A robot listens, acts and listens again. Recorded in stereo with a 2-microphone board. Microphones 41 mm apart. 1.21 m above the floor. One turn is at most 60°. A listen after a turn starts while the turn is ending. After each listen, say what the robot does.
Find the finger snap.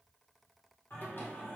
Keep listening.
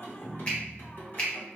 Turn 30° left.
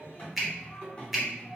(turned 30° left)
Found it: a finger snap, straight ahead.